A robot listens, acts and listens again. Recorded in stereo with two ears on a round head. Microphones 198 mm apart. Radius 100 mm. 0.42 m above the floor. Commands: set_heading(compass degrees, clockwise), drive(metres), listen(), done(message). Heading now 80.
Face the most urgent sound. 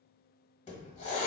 listen()
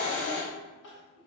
set_heading(350)
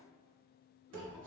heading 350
listen()
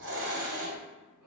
done("Facing the crying.")